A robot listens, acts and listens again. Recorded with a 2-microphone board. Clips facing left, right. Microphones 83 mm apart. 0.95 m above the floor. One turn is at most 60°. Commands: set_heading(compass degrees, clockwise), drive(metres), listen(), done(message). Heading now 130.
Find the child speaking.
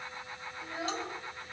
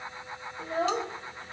set_heading(175)
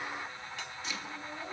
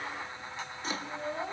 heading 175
set_heading(235)
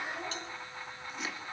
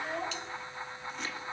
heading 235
set_heading(280)
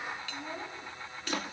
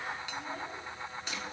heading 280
set_heading(265)
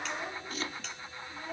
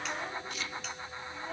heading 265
done("Found it: a child speaking, straight ahead, over 4 m away.")